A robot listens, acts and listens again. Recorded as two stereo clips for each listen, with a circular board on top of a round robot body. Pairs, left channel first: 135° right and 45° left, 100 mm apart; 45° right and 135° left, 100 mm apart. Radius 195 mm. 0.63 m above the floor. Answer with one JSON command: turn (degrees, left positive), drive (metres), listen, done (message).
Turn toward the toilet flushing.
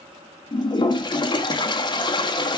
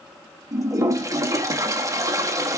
{"turn": -170}
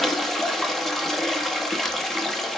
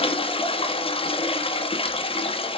{"turn": -50}
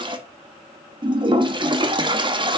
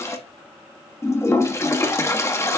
{"turn": 15}
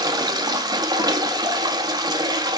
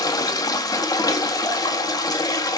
{"done": "Facing the toilet flushing."}